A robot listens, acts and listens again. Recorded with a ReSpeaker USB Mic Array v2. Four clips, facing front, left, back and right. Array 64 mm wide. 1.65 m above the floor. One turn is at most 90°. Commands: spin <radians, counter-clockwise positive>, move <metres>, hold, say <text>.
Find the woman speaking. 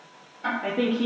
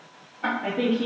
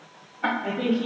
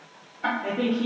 spin 0.17
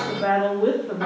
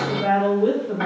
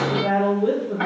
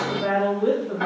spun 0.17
say Facing the woman speaking.